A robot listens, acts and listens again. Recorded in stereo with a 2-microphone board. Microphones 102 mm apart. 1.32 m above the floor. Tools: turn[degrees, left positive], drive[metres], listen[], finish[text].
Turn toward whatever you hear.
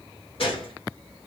Thought: The gunshot: about 60° left or 120° left.
Action: turn[60]
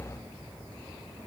Action: listen[]
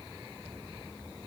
Action: finish[I heard a gunshot, but can't make it out now. It was about straight ahead or 60° left.]